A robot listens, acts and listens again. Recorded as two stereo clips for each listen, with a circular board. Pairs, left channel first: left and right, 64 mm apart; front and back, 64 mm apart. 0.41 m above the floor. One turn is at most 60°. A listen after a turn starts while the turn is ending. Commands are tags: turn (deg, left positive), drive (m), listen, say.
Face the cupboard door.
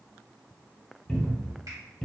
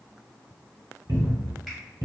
<turn deg="60"/>
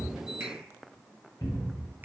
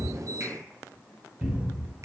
<turn deg="60"/>
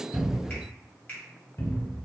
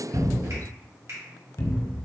<turn deg="45"/>
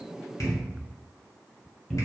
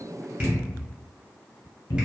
<say>Facing the cupboard door.</say>